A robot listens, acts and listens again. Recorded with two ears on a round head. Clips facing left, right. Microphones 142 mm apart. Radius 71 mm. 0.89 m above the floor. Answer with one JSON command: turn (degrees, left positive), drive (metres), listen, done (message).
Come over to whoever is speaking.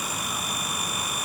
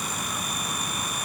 {"listen": true}
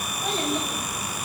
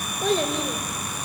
{"turn": -55}
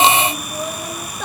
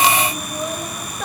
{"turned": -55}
{"drive": 1.0}
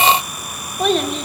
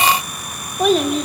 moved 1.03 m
{"drive": 1.0}
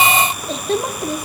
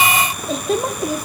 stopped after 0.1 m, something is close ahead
{"done": "I am next to the child speaking."}